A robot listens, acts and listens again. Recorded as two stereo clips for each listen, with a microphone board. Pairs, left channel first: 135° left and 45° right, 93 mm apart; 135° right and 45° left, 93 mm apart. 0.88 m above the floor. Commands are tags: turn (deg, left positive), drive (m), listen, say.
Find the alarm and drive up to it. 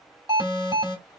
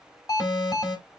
<turn deg="-85"/>
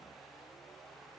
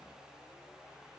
<listen/>
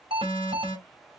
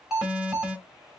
<turn deg="-40"/>
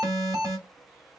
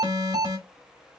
<drive m="1.0"/>
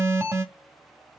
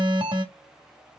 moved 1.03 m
<turn deg="15"/>
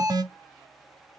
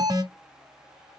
<drive m="1.0"/>
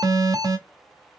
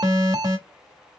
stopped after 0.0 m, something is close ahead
<say>Arrived at the alarm, straight ahead.</say>